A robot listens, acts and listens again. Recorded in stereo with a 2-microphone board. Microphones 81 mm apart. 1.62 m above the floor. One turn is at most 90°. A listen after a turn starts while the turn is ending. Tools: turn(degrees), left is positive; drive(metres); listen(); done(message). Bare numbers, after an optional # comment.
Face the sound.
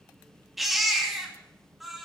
turn(30)
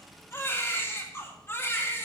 # So it is at 150° left.
turn(90)
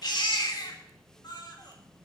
# The baby crying is now 65° left.
turn(65)
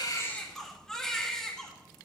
# The baby crying is now 10° left.
turn(10)
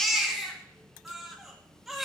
done("Found it: a baby crying, straight ahead, 2 to 4 m away.")